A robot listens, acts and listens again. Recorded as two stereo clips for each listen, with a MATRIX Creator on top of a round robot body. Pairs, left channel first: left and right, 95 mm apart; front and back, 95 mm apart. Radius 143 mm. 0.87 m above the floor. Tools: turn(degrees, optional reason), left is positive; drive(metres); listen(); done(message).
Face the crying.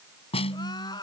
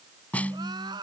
turn(degrees=140, reason="The crying: 140° left.")
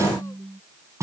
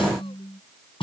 listen()
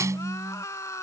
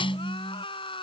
turn(degrees=30, reason="The crying is now 30° left.")
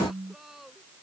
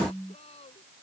done("Facing the crying.")